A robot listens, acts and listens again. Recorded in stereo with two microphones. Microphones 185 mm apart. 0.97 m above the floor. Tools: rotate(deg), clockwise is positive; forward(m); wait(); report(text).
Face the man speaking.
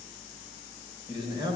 rotate(25)
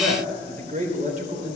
rotate(140)
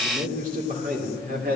rotate(50)
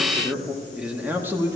rotate(15)
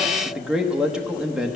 report("Found it: a man speaking, straight ahead.")